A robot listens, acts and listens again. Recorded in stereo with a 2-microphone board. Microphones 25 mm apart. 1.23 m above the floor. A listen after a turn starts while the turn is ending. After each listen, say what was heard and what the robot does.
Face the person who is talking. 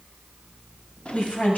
Turn 90° left.
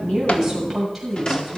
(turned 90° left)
Facing the woman speaking, over 4 m away.